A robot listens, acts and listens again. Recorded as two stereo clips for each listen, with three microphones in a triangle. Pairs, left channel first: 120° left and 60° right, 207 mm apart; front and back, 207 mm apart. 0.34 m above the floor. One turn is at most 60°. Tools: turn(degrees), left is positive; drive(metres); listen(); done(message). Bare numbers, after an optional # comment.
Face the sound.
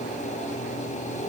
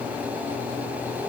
listen()
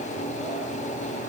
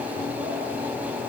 listen()
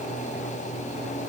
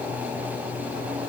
done("I can't make out anything.")